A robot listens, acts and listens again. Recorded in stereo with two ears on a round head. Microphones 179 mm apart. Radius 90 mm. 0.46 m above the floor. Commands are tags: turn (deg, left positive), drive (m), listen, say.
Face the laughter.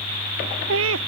<turn deg="-70"/>
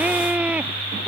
<turn deg="-10"/>
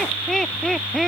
<say>Found it: laughter, straight ahead.</say>